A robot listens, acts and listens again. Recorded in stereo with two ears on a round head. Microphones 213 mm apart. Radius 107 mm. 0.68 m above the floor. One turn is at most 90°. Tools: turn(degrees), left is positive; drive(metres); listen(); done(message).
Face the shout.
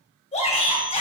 turn(degrees=25)
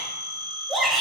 done("Facing the shout, 2 to 4 m away.")